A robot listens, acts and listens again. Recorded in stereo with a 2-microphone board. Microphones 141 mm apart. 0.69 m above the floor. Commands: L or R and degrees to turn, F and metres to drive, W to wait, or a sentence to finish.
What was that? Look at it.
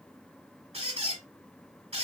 R45
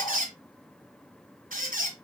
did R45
R90
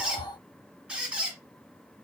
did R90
R10
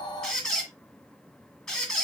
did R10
Facing the squeak.